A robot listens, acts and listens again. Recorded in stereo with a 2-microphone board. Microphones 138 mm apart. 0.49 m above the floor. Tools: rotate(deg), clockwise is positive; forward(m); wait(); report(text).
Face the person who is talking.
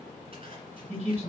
rotate(60)
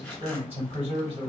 rotate(50)
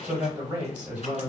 rotate(10)
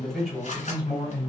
report("Found it: a man speaking, straight ahead, 1 to 2 m away.")